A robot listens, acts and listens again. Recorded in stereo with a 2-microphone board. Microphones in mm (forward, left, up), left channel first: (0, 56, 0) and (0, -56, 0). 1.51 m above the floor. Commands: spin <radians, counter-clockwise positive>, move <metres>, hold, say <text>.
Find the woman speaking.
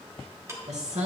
spin -1.57
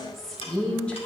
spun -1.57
spin 0.17
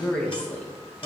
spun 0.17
spin 0.26
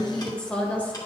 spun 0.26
spin 0.26
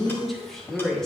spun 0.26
say Facing the woman speaking.